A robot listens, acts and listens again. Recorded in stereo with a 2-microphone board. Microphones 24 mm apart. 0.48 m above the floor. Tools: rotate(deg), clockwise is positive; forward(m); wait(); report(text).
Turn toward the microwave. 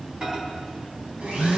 rotate(35)
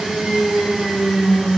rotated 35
wait()
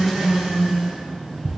report("Facing the microwave, 2 to 4 m away.")